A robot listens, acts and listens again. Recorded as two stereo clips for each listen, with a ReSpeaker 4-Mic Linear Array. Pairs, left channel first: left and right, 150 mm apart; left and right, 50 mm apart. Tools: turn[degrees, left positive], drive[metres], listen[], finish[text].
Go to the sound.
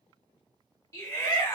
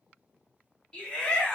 Thought: The shout: about 20° left or 160° left.
Action: turn[20]
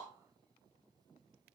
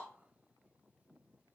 Action: listen[]
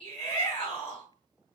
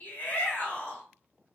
Thought: So it is at 135° left.
Action: turn[135]
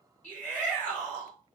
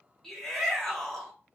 Thought: The shout is now 10° left.
Action: turn[10]
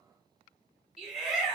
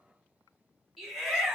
Action: drive[1.0]
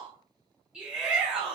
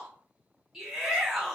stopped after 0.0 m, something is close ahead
Action: finish[Blocked. The shout is further on, straight ahead.]